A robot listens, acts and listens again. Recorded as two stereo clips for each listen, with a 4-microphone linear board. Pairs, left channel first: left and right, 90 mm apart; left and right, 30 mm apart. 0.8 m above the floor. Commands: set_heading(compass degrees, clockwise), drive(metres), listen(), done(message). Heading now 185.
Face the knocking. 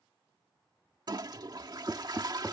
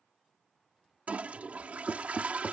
set_heading(205)
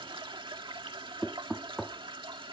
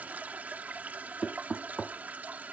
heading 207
done("Facing the knocking.")